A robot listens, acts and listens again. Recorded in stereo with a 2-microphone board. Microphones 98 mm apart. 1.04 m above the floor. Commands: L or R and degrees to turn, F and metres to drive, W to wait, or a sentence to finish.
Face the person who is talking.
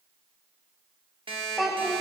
L30
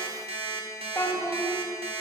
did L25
L155
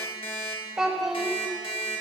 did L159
Found it: a child speaking, straight ahead, 1 to 2 m away.